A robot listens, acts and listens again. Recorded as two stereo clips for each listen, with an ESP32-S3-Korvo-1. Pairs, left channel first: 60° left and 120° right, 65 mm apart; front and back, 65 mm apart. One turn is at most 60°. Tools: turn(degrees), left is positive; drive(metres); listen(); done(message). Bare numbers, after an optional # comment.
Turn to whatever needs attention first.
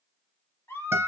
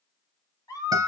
# The scream: 10° left.
turn(10)
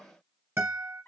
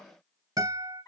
listen()
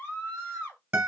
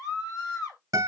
done("Found it: a scream, straight ahead, 1 to 2 m away.")